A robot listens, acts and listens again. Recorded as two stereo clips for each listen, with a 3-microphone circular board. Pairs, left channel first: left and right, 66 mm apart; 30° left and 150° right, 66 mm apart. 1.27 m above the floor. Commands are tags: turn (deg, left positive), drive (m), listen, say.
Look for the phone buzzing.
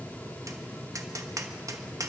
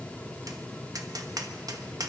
<listen/>
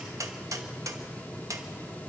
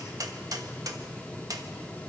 <listen/>
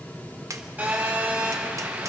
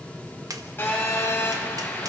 <turn deg="-30"/>
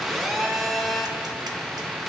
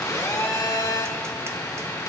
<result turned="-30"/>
<say>Found it: a phone buzzing, straight ahead.</say>